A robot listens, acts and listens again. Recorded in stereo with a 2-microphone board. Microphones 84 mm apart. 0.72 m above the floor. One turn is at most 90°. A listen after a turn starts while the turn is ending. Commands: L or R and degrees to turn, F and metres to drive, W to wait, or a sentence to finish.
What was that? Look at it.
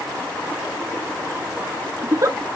R40
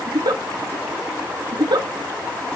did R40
R90
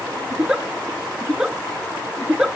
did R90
R10
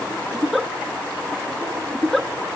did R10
Found it: a giggle, straight ahead, under 1 m away.